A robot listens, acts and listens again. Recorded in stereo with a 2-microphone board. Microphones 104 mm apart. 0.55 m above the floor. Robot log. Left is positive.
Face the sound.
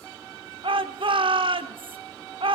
note: The shout: about 55° right or 125° right.
cmd yaw -55
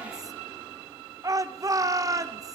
note: So it is at 40° right.
cmd yaw -40
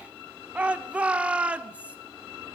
note: The shout is now 15° right.
cmd yaw -15
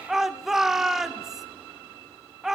end: Found it: a shout, straight ahead, 1 to 2 m away.